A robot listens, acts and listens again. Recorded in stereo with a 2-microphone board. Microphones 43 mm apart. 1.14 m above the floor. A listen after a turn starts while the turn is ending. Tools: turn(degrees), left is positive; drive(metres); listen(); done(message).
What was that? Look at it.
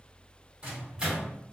turn(degrees=-20)
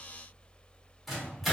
done("Facing the microwave.")